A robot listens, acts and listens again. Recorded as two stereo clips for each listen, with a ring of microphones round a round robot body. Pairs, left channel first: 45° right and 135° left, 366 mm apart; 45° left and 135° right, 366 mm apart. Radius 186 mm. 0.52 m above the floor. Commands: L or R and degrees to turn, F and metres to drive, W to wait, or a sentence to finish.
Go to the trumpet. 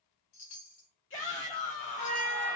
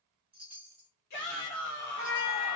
R25
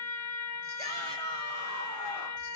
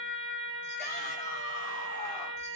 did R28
F1.0
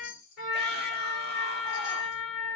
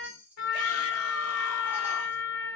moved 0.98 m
F1.0
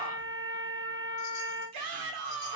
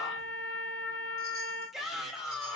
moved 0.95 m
L15
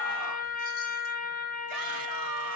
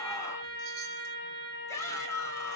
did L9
L10
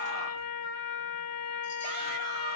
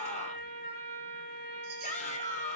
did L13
F1.0
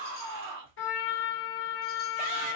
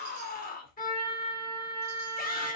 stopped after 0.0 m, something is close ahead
R10
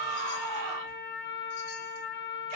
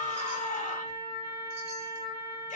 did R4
I am next to the trumpet.